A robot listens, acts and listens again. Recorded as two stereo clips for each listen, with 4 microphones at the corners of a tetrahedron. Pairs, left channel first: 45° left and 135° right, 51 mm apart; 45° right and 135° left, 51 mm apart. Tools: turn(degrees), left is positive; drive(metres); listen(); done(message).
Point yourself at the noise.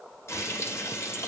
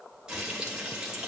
turn(degrees=60)
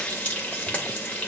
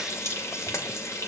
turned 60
turn(degrees=-25)
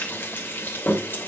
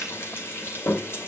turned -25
done("Facing the frying, 2 to 4 m away.")